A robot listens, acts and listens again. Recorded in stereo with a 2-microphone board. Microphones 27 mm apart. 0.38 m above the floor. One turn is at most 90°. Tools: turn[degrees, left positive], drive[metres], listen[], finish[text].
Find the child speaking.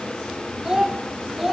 Action: turn[-30]
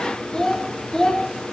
Thought: So it is at 30° left.
Action: turn[30]
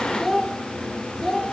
Thought: The child speaking is now 20° left.
Action: turn[20]
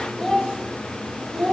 Thought: The child speaking is now 20° left.
Action: turn[20]
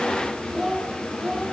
Action: finish[Found it: a child speaking, straight ahead.]